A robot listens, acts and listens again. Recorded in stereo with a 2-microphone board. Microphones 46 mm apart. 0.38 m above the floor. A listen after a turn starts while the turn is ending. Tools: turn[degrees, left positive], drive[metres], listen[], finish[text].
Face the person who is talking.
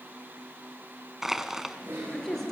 Action: turn[30]
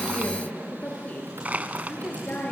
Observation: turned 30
Thought: So it is at 140° left.
Action: turn[140]
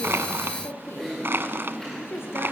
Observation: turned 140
Thought: The woman speaking is now 60° left.
Action: turn[60]
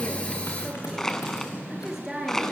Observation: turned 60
Thought: The woman speaking is now 10° right.
Action: turn[-10]
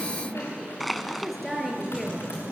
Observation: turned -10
Action: finish[Found it: a woman speaking, straight ahead.]